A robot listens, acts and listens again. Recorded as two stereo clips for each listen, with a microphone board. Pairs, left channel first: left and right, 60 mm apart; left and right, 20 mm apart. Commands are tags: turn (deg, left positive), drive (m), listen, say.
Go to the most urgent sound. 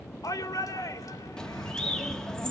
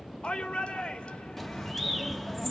<turn deg="90"/>
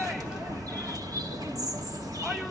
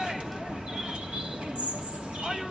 <listen/>
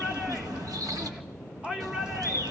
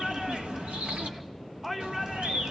<turn deg="-15"/>
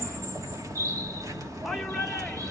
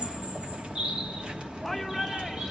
<drive m="1.0"/>
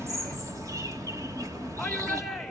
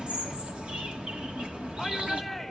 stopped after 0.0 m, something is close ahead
<say>Blocked. The shout is further on, straight ahead.</say>